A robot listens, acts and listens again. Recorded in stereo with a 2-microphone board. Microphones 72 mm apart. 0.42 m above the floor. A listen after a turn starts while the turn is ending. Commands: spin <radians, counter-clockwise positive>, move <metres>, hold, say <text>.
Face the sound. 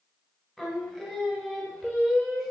spin 0.52
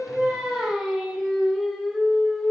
spin 0.52
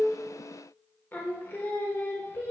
spin 2.53
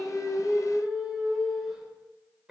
spin -0.17
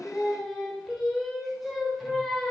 say Facing the singing, 1 to 2 m away.